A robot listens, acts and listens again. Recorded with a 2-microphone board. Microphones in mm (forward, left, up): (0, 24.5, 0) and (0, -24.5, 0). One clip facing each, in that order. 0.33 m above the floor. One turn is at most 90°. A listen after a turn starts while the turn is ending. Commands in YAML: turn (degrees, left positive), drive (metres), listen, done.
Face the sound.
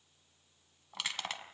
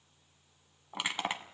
turn: -20
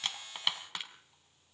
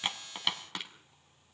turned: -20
done: "Found it: crushing, straight ahead, 2 to 4 m away."